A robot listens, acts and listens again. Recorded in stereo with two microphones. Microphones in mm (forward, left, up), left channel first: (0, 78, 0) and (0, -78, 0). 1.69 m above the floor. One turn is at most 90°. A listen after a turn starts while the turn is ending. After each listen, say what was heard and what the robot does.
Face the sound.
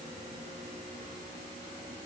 Keep listening.
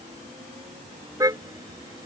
The car horn: about 20° right or 160° right. Turn 20° right.
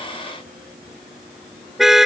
Facing the car horn.